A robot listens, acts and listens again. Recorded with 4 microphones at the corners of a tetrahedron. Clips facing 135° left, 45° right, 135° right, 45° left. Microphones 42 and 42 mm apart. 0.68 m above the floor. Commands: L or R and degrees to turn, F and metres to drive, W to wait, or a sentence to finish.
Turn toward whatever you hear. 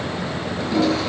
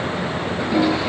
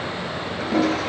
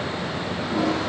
R115
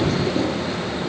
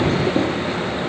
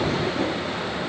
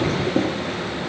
L10
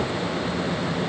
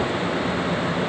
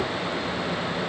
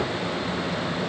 W
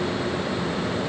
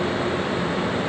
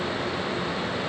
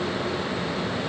W
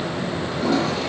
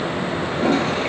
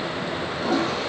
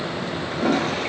Found it: a toilet flushing, straight ahead, over 4 m away.